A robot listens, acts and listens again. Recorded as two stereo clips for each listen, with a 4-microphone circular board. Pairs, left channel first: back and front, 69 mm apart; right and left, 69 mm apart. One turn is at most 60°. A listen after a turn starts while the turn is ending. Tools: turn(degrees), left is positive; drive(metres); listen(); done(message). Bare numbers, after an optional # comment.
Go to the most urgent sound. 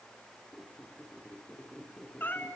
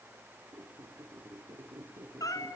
listen()
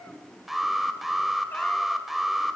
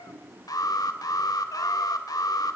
# The alarm: 90° right.
turn(-60)
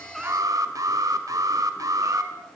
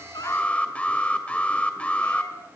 # The alarm is now 20° right.
turn(-20)
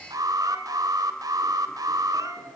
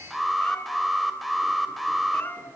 drive(1.0)
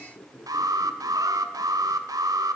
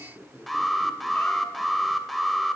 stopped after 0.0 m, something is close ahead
done("Blocked. The alarm is further on, straight ahead.")